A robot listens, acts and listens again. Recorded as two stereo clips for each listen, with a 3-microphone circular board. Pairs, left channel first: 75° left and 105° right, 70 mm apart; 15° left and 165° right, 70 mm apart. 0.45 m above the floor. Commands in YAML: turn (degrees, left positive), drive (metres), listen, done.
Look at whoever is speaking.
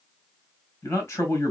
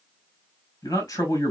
turn: 30
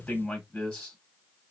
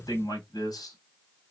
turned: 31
done: "Facing the man speaking, 2 to 4 m away."